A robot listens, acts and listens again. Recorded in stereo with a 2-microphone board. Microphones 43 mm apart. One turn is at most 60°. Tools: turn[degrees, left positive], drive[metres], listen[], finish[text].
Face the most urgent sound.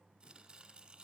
Action: listen[]
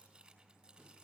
Action: listen[]
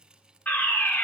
Thought: The fire alarm: about 45° left or 135° left.
Action: turn[45]
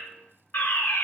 Thought: So it is at 80° left.
Action: turn[60]
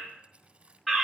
Action: finish[Facing the fire alarm.]